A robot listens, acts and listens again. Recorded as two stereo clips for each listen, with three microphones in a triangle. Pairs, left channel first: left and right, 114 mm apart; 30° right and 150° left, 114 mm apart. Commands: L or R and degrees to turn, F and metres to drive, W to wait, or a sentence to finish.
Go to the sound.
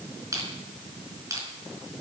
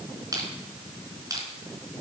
R150
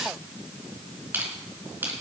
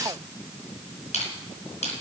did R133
R20
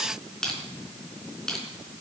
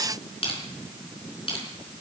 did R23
F1.0
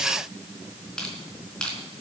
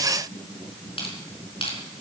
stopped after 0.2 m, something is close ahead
Something is in my way. I am facing the crushing but have not reached it.